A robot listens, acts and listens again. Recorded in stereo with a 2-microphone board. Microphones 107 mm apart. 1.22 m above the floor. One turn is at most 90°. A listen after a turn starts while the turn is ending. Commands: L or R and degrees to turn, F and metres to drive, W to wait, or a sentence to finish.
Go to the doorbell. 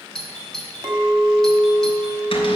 L30
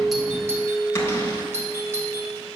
R25
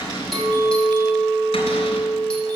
W
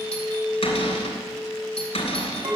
W
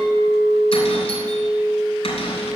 I heard a doorbell from this way, but can't make it out now. I did not reach it.